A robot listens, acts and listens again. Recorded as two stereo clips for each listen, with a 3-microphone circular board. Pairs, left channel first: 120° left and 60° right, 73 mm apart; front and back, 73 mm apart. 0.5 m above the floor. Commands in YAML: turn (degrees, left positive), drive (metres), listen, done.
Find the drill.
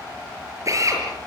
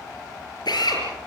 turn: -15
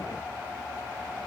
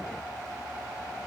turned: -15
listen: true
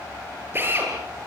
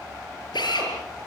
done: "Found it: a drill, straight ahead, over 4 m away."